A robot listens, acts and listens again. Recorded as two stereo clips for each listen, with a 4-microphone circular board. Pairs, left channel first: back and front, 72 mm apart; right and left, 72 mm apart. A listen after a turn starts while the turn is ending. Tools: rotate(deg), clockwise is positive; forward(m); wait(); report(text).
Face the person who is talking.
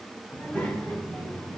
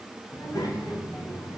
rotate(115)
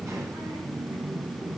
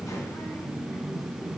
rotate(30)
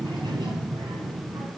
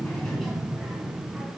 report("Found it: a child speaking, straight ahead, 2 to 4 m away.")